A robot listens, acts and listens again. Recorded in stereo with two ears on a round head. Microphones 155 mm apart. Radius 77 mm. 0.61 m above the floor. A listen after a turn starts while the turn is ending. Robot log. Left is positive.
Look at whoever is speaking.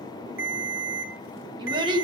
note: The child speaking: about 30° right or 150° right.
cmd yaw -30
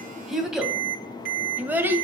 note: So it is at 15° right.
cmd yaw -15
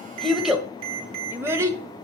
note: The child speaking is now 15° right.
cmd yaw -15
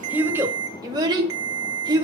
note: The child speaking is now 25° right.
cmd yaw -25
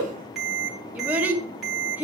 note: The child speaking is now 10° right.
cmd yaw -10
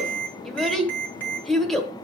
end: Found it: a child speaking, straight ahead, 1 to 2 m away.